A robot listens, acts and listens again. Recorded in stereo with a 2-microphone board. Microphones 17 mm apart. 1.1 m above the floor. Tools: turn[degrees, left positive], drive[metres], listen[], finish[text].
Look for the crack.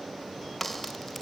Action: turn[30]
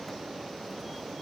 Action: listen[]
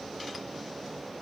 Action: finish[I heard a crack, but can't make it out now. It was about 15° right or 135° left.]